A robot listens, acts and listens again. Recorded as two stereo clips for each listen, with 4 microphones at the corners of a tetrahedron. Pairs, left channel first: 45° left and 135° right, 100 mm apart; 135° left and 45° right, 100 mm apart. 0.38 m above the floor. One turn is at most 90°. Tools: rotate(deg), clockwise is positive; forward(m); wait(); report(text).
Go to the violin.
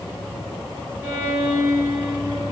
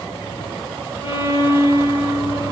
rotate(-90)
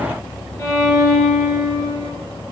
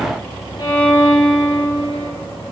rotate(-90)
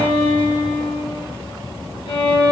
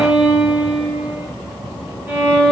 rotate(-25)
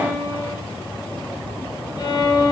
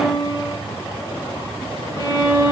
forward(1.0)
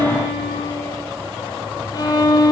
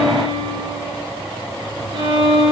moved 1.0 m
rotate(10)
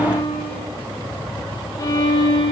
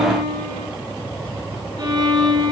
forward(1.0)
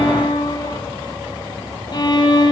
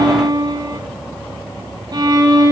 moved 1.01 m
forward(1.0)
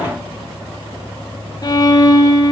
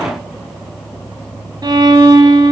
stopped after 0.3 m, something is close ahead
report("Arrived at the violin, straight ahead.")